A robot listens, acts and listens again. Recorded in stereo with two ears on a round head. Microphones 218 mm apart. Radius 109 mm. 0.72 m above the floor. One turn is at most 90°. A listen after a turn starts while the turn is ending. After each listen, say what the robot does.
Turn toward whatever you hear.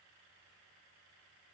Keep listening.
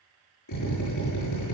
Turn 90° left.
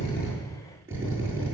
Turn 10° right.
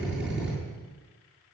Facing the drill.